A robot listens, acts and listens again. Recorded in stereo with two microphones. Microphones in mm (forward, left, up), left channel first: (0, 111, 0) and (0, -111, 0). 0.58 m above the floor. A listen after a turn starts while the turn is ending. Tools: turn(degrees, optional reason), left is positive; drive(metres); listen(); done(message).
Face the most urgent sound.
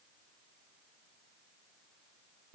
listen()
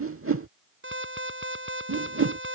turn(degrees=-65, reason="The alarm: about 65° right or 115° right.")
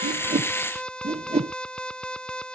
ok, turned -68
done("Found it: an alarm, straight ahead.")